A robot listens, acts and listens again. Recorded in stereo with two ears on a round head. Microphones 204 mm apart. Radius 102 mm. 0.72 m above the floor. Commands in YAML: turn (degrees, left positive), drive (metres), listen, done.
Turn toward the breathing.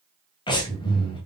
turn: 20
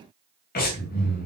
turn: 140
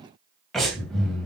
done: "Found it: breathing, straight ahead."